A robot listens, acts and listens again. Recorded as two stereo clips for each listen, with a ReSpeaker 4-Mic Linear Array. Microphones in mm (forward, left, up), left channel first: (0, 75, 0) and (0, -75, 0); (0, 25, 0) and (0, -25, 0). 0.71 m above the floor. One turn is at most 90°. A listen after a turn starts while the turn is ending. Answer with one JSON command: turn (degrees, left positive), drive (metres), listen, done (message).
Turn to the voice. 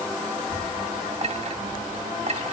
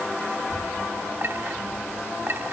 {"turn": -15}
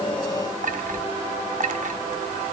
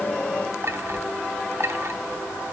{"turn": -30}
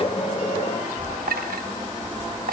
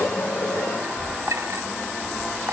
{"turn": 10}
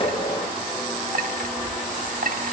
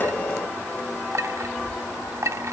{"done": "Facing the child speaking, over 4 m away."}